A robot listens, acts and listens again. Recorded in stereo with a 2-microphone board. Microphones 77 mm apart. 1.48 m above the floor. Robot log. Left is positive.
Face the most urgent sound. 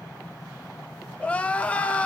note: The crying: about 20° left or 160° left.
cmd yaw +20
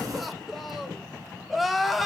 end: Found it: crying, straight ahead.